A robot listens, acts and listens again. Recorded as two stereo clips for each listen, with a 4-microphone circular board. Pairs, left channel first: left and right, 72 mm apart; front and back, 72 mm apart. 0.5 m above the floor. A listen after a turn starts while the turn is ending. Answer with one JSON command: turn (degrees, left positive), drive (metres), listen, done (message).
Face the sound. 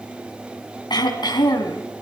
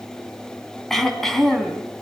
{"turn": 85}
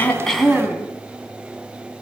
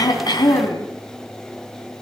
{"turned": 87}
{"done": "Facing the throat clearing, over 4 m away."}